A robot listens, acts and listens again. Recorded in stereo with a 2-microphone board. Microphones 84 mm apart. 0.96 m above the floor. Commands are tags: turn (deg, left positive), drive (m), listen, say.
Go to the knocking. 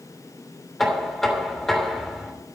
<turn deg="30"/>
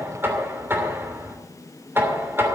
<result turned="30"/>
<turn deg="-25"/>
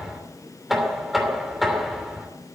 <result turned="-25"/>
<drive m="1.0"/>
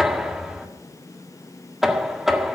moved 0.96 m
<drive m="1.0"/>
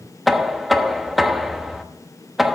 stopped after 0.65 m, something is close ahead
<say>I am next to the knocking.</say>